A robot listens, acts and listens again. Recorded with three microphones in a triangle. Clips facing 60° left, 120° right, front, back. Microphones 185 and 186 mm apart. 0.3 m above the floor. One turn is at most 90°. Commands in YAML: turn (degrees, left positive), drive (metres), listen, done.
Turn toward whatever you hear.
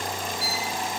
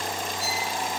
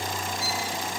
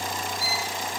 turn: 20
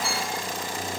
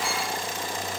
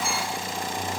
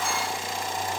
listen: true
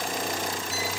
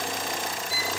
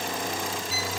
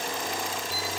listen: true
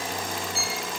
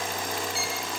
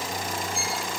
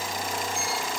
done: "Facing the violin."